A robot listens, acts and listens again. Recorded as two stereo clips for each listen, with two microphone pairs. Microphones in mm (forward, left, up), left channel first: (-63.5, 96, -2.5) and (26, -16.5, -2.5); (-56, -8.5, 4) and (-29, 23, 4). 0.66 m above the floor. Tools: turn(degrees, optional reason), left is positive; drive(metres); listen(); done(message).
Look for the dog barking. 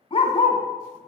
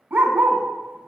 turn(degrees=75, reason="The dog barking: 75° left.")
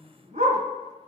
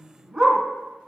turn(degrees=-30, reason="The dog barking is now 30° right.")
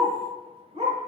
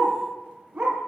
turn(degrees=-15, reason="The dog barking is now 15° right.")
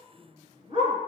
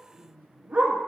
done("Facing the dog barking.")